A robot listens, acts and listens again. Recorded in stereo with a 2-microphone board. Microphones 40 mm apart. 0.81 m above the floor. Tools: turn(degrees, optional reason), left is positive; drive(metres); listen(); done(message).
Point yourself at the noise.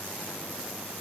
listen()
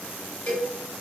turn(degrees=60, reason="The cowbell: about 60° left or 120° left.")
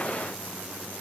listen()
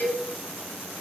turn(degrees=55, reason="So it is at 55° left.")
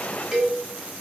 done("Facing the cowbell, 1 to 2 m away.")